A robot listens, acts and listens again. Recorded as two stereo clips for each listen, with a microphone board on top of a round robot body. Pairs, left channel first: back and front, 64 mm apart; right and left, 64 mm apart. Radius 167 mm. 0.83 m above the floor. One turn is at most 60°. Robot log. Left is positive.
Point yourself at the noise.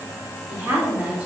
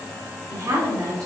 note: The woman speaking: 70° left.
cmd yaw +60
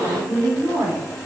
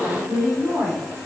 note: The woman speaking is now 15° left.
cmd yaw +15
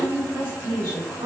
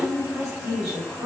note: The woman speaking is now 10° left.
cmd yaw +10
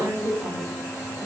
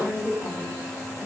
end: Facing the woman speaking.